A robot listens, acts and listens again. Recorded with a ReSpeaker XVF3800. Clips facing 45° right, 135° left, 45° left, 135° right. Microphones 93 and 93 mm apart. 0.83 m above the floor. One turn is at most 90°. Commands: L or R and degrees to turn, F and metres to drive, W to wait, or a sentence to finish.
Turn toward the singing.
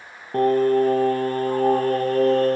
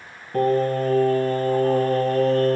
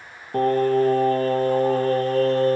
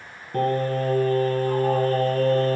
R25
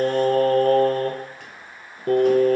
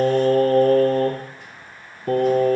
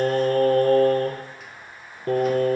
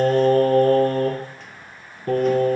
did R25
Found it: singing, straight ahead.